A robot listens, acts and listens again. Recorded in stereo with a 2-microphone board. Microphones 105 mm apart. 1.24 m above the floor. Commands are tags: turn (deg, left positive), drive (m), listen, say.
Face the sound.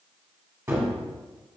<turn deg="-25"/>
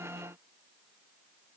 <listen/>
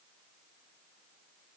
<say>I heard a gunshot, but can't make it out now. It was about straight ahead or 130° right.</say>